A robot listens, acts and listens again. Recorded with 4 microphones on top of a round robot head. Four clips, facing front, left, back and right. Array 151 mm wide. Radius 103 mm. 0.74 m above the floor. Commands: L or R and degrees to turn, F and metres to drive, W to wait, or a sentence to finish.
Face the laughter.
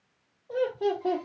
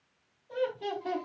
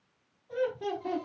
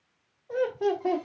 R50
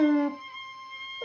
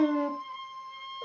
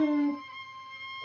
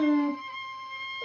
R10
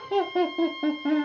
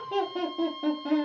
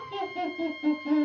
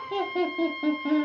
R15
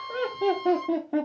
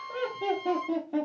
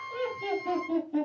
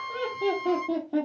R20
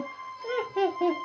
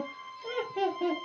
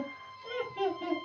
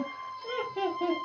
Facing the laughter, 2 to 4 m away.